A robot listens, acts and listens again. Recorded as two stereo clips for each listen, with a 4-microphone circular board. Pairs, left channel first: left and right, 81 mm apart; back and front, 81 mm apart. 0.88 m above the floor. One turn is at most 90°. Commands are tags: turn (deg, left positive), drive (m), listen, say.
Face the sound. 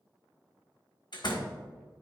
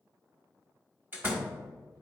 <turn deg="65"/>
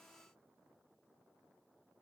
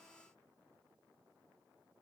<say>Facing where the door slam came from. I can't hear it now.</say>